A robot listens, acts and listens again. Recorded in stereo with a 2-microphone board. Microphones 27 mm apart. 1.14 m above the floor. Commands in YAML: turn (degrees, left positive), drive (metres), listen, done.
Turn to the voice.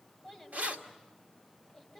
turn: 30
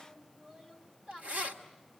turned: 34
turn: -35
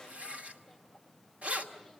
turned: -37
listen: true
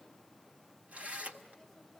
listen: true
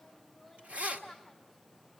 done: "Found it: a child speaking, straight ahead, over 4 m away."